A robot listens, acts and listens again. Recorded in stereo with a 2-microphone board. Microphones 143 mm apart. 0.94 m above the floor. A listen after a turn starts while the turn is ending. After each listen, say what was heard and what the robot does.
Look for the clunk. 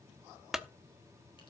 Turn 30° right.
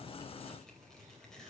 Keep listening.
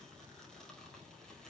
I heard a clunk, but can't make it out now. It was about 25° left or 145° right.